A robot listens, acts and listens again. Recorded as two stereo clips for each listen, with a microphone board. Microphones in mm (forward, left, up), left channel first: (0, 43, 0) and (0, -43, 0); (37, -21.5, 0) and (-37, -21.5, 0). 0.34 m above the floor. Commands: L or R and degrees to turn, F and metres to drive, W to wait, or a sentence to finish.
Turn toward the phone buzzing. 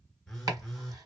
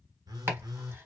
L175
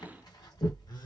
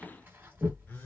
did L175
L60
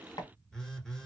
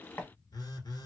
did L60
Facing the phone buzzing.